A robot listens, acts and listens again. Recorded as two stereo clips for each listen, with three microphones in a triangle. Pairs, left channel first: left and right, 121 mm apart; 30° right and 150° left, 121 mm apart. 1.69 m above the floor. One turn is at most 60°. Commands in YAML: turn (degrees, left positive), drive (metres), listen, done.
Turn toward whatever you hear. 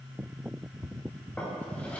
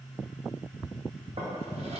turn: 60
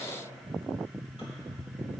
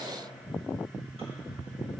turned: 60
turn: 60
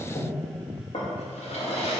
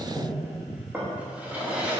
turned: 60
turn: 60
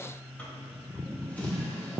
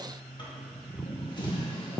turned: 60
turn: 15
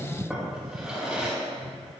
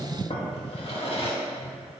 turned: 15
done: "Facing the drawer, 1 to 2 m away."